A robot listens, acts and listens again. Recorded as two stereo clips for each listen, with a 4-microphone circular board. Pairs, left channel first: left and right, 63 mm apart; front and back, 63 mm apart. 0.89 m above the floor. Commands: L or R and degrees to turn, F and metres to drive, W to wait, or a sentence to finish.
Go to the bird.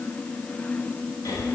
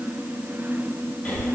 W
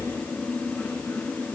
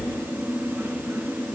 W
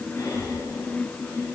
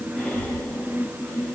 I can't make out a bird to turn to.